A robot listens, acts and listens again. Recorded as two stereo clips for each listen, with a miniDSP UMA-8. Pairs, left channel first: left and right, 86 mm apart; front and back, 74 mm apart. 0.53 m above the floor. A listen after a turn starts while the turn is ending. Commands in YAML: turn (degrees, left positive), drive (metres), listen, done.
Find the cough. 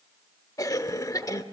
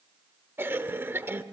turn: 125
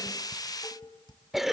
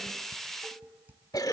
done: "Found it: a cough, straight ahead."